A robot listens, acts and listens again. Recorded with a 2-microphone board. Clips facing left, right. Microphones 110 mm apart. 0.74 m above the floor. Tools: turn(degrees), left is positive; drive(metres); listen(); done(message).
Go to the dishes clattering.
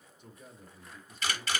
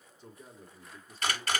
listen()
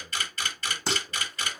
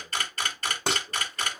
turn(degrees=-90)
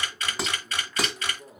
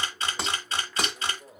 drive(metres=1.0)
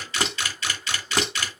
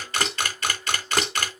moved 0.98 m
drive(metres=1.0)
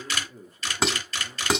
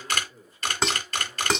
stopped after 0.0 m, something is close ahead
done("Arrived at the dishes clattering, straight ahead.")